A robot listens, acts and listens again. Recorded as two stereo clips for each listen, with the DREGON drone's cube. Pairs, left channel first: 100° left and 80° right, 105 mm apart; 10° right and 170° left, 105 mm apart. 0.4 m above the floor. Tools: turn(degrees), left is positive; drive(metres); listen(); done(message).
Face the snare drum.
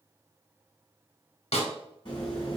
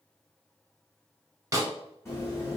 turn(degrees=115)
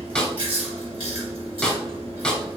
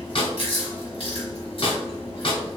turn(degrees=20)
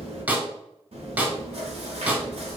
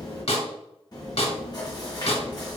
done("Found it: a snare drum, straight ahead.")